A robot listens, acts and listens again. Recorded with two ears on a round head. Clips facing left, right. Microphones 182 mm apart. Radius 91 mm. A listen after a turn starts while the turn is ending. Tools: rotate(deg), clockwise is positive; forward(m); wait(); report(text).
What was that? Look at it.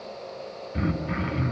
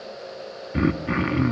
rotate(65)
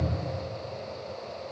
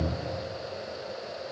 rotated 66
wait()
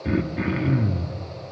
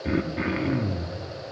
report("Facing the throat clearing, 1 to 2 m away.")